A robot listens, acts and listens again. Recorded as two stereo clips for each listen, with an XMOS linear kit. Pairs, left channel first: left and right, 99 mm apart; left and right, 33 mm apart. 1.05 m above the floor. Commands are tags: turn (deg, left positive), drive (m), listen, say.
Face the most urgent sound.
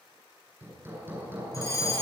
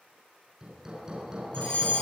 <turn deg="35"/>
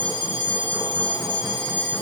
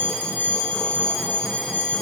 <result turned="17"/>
<turn deg="130"/>
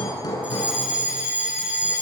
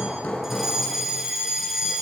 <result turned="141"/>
<turn deg="-15"/>
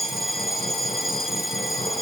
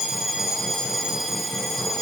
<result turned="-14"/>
<say>Facing the fire alarm.</say>